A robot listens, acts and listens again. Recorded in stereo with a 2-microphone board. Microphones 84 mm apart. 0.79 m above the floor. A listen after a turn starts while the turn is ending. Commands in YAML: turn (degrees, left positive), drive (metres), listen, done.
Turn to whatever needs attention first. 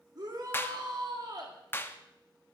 turn: -55
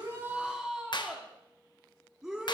done: "Facing the shout."